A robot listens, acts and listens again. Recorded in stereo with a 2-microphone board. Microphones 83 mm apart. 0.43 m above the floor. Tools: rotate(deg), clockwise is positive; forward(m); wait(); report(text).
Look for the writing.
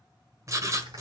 rotate(40)
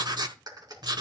rotate(90)
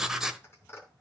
rotate(10)
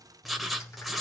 report("Facing the writing, 1 to 2 m away.")